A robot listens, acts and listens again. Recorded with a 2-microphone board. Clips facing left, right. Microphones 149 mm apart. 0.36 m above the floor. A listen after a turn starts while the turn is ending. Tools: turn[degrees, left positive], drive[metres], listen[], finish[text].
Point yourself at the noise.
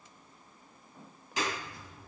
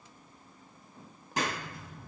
Thought: The clap: about 45° right or 135° right.
Action: turn[-45]
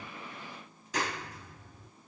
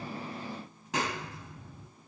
Thought: So it is at 85° right.
Action: turn[-85]
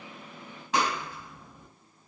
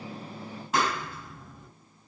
Action: finish[Facing the clap, over 4 m away.]